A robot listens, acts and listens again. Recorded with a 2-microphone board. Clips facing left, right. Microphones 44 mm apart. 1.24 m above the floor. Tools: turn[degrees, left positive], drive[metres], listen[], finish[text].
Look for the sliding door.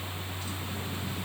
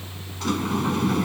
Thought: The sliding door: about 70° right or 110° right.
Action: turn[-70]
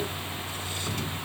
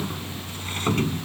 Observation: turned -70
Thought: So it is at 45° right.
Action: turn[-45]
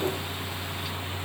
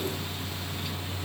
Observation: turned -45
Action: listen[]
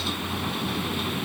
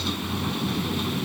Action: finish[Found it: a sliding door, straight ahead.]